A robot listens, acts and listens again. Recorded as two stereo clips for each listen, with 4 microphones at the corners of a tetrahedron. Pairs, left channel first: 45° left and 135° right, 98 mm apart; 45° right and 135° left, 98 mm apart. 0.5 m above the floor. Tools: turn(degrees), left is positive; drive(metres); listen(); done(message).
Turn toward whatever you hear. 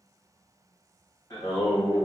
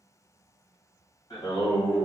done("Found it: singing, straight ahead, 2 to 4 m away.")